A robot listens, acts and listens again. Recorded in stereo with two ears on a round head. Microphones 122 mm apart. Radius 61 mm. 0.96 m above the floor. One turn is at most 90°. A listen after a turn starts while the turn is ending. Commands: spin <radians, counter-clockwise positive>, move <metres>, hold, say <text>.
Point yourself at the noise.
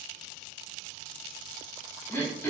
spin 0.26
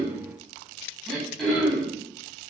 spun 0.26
say Found it: throat clearing, straight ahead, 2 to 4 m away.